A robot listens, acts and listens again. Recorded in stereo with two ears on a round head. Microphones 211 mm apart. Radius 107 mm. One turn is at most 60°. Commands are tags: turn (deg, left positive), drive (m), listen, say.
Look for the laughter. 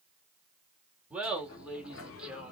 <turn deg="-30"/>
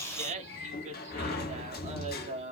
<turn deg="-60"/>
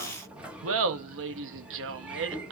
<turn deg="-60"/>
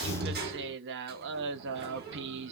<turn deg="-50"/>
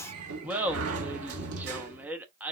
<say>Found it: laughter, straight ahead.</say>